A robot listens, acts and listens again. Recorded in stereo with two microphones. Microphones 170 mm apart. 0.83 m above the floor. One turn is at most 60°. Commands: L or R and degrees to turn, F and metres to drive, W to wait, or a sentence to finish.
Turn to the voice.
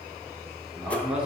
R30
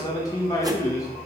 L25
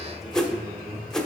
Found it: a man speaking, straight ahead.